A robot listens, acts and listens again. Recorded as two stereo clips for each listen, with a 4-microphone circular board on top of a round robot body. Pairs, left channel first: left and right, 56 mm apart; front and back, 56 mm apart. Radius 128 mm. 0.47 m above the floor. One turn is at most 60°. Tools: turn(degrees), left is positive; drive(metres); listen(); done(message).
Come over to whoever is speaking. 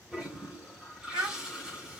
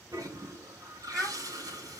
turn(degrees=-60)
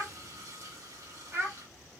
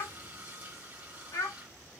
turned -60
turn(degrees=-30)
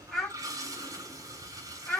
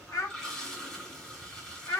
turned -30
turn(degrees=10)
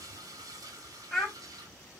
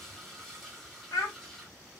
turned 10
drive(metres=1.0)
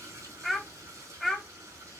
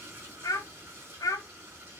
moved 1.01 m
drive(metres=1.0)
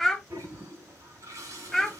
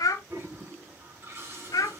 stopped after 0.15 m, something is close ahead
done("Arrived at the child speaking, straight ahead.")